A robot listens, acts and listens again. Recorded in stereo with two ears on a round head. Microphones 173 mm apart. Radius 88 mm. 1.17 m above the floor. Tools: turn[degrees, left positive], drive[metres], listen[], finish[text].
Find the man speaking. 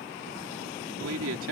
Thought: The man speaking: about 75° right or 105° right.
Action: turn[-75]
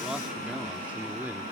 Thought: So it is at 10° right.
Action: turn[-10]
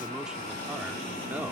Action: listen[]
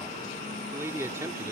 Thought: The man speaking is now 15° right.
Action: turn[-15]
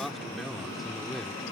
Action: finish[Facing the man speaking.]